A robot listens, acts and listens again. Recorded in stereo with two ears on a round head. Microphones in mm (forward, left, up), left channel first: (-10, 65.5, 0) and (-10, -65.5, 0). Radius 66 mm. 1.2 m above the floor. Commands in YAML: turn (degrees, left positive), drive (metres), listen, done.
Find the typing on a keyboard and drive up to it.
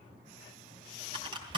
turn: -35
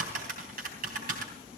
turn: -110
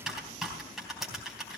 drive: 1.0
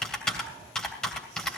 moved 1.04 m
drive: 1.0
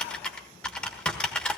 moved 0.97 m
turn: 10
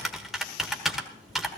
drive: 1.0
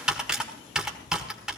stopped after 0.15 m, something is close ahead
done: "Arrived at the typing on a keyboard, straight ahead."